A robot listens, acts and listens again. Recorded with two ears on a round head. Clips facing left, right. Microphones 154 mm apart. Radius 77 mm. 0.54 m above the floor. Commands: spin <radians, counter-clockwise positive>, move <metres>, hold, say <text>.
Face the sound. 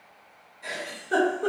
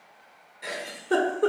spin -1.31
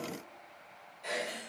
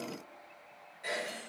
spin -0.26
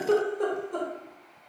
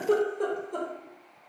say Found it: a giggle, straight ahead.